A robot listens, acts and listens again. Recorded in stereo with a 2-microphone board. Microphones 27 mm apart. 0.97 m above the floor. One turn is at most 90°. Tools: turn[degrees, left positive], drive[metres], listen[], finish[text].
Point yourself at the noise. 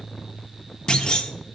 Thought: The clunk: about 30° left or 150° left.
Action: turn[30]
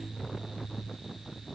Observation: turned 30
Action: listen[]
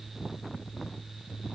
Action: finish[I heard a clunk, but can't make it out now. It was about straight ahead or 120° left.]